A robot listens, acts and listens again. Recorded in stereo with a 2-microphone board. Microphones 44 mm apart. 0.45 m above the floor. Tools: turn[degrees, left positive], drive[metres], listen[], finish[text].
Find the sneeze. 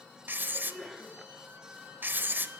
Action: turn[30]
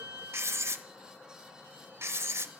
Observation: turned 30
Action: listen[]
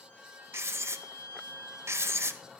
Action: finish[I heard a sneeze, but can't make it out now. It was about 30° right or 150° left.]